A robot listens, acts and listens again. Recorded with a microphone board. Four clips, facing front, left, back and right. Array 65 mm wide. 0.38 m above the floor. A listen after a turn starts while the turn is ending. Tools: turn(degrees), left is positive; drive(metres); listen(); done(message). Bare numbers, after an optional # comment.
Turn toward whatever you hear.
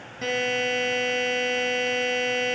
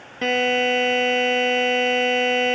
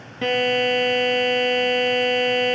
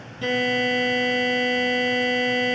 # The buzzer: 115° left.
turn(115)
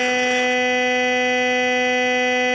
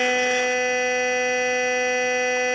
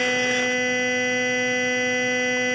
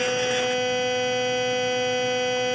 # The buzzer is now 15° left.
turn(15)
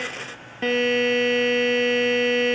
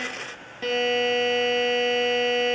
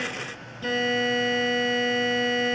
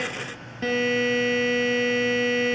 done("Found it: a buzzer, straight ahead, 1 to 2 m away.")